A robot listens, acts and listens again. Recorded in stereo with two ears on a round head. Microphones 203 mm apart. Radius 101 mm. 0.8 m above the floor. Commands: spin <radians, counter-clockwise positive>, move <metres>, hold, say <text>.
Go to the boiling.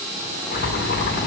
spin 0.79
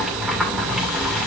move 1.0
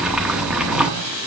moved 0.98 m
move 1.0
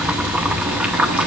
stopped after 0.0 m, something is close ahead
say I am next to the boiling.